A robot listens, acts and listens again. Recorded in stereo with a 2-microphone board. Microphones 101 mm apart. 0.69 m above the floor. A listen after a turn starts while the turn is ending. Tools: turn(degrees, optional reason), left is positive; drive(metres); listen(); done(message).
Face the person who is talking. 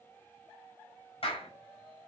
listen()
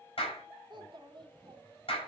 turn(degrees=-50, reason="The child speaking: about 50° right or 130° right.")
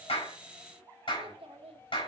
turn(degrees=-80, reason="So it is at 80° right.")
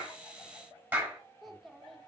done("Found it: a child speaking, straight ahead, 1 to 2 m away.")